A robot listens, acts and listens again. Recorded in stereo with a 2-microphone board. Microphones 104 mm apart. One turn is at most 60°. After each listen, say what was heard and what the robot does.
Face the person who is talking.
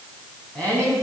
Turn 30° left.
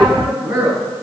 So it is at 15° right. Turn 15° right.
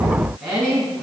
Found it: a woman speaking, straight ahead, over 4 m away.